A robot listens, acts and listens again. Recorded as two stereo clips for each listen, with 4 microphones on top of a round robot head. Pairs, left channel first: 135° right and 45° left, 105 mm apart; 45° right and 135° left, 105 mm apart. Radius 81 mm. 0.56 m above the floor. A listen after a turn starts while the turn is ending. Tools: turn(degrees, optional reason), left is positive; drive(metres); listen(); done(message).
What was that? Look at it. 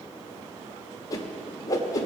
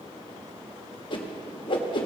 turn(degrees=-80, reason="The whoosh: 80° right.")
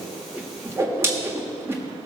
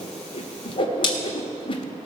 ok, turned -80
turn(degrees=-15, reason="The whoosh is now 15° right.")
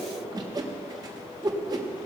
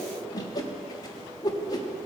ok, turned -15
done("Found it: a whoosh, straight ahead.")